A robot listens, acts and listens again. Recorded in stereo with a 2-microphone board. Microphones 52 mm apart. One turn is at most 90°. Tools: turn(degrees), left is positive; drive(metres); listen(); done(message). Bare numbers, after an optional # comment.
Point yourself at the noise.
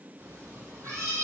# The cat meowing: about 60° right or 120° right.
turn(-60)
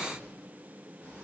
listen()
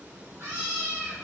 # So it is at 70° right.
turn(-70)
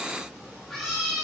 done("Facing the cat meowing.")